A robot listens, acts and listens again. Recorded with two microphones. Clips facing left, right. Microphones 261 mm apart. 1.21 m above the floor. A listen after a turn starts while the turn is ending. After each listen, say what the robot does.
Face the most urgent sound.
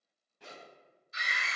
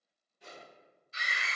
Turn 30° right.
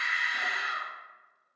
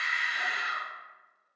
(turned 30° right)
Turn 120° right.
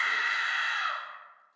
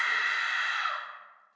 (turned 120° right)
Turn 15° right.
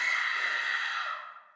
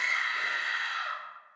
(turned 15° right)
Facing the scream.